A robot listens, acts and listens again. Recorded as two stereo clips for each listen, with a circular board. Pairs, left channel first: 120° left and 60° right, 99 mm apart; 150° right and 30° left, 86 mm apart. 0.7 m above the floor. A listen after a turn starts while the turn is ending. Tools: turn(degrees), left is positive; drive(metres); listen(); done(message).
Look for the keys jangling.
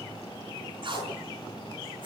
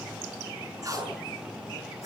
listen()
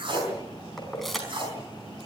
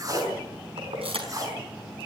turn(degrees=30)
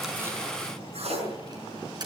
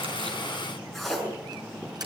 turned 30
turn(degrees=-15)
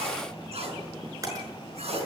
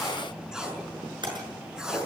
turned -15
done("Facing the keys jangling.")